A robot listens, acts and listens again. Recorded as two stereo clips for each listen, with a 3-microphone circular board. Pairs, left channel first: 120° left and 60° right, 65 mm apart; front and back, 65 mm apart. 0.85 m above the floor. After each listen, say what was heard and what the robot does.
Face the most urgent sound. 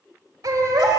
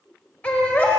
The baby crying: 70° right. Turn 70° right.
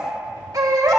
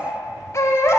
The baby crying is now 40° right. Turn 40° right.
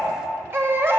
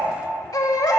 Facing the baby crying, 1 to 2 m away.